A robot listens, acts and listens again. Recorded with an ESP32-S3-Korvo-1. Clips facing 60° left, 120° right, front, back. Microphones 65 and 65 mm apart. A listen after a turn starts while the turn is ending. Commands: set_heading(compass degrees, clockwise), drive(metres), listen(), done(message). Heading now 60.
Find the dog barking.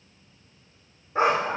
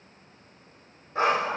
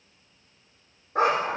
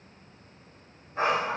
set_heading(80)
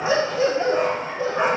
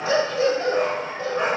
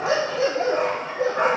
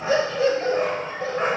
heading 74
set_heading(89)
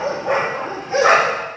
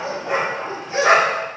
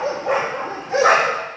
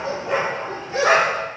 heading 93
done("Facing the dog barking, over 4 m away.")